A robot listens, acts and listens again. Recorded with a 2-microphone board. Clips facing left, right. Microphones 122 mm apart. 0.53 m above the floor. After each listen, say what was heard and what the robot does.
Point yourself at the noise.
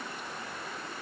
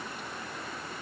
Keep listening.
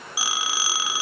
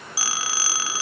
The phone ringing: about 20° left or 160° left. Turn 20° left.
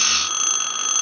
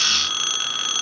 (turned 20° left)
So it is at 140° left. Turn 140° left.
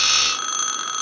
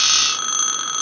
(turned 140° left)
Facing the phone ringing.